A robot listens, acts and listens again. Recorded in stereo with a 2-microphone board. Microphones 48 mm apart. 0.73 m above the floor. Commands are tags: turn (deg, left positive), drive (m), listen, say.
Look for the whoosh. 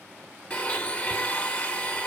<listen/>
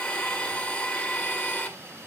<listen/>
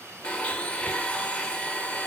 <say>I can't make out a whoosh, only a blender.</say>